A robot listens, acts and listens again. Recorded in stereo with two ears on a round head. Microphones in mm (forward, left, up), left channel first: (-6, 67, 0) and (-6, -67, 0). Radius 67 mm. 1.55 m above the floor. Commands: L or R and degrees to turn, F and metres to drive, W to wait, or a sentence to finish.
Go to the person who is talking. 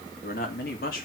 L65
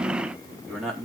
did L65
F1.0
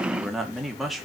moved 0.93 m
F1.0
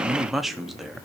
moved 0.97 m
F1.0
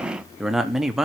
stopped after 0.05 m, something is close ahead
Arrived at the man speaking, straight ahead.